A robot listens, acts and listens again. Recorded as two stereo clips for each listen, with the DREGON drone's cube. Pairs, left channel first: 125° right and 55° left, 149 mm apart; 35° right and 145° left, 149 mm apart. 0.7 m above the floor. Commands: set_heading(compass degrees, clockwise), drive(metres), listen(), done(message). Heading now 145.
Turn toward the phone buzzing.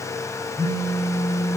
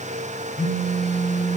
set_heading(195)
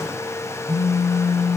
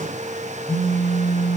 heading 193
done("Found it: a phone buzzing, straight ahead, 1 to 2 m away.")